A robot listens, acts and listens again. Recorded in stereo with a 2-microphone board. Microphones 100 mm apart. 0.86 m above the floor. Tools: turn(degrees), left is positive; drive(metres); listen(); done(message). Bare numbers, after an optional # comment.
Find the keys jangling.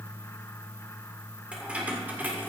# The keys jangling: about 20° right or 160° right.
turn(-20)
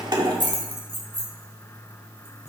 # So it is at 115° right.
turn(-115)
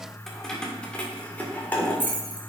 # The keys jangling is now 15° left.
turn(15)
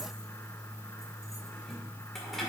listen()
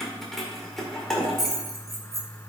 done("Found it: keys jangling, straight ahead, 2 to 4 m away.")